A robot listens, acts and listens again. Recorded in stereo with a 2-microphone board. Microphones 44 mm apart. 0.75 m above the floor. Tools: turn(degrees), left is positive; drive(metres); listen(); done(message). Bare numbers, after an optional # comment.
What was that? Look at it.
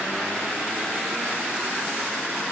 listen()
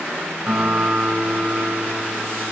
turn(-30)
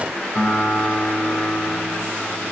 # So it is at 20° left.
turn(20)
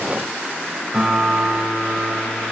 done("Found it: a guitar, straight ahead, 2 to 4 m away.")